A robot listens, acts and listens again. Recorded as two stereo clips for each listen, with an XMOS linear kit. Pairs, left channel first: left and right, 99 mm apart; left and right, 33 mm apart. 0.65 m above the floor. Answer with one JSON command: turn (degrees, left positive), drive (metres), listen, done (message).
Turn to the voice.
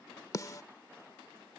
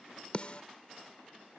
{"listen": true}
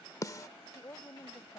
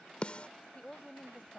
{"turn": 25}
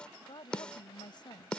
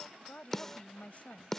{"turn": 130}
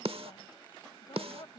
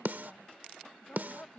{"turn": 45}
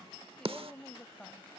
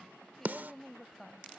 {"done": "Facing the woman speaking."}